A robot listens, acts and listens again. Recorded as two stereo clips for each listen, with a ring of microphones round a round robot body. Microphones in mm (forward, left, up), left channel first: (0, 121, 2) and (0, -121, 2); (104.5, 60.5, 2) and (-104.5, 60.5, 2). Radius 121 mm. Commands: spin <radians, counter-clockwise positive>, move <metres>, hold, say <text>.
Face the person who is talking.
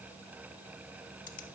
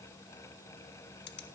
hold
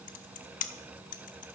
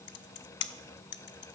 hold
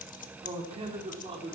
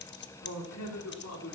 spin -0.44
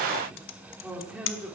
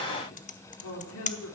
say Found it: a man speaking, straight ahead, 2 to 4 m away.